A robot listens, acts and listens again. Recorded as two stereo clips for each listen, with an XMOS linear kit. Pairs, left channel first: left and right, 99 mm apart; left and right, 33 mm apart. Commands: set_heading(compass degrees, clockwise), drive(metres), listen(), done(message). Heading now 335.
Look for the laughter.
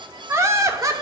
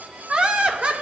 set_heading(10)
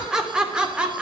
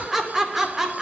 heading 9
set_heading(19)
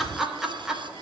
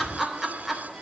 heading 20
done("Found it: laughter, straight ahead.")